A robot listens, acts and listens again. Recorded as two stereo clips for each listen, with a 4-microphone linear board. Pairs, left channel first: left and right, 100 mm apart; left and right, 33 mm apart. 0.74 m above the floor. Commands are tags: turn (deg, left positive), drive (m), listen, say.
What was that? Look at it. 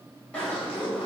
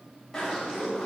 <turn deg="30"/>
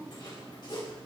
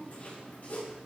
<turn deg="135"/>
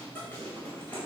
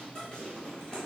<turn deg="20"/>
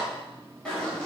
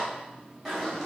<turn deg="10"/>
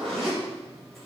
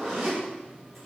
<say>Found it: a zipper, straight ahead, over 4 m away.</say>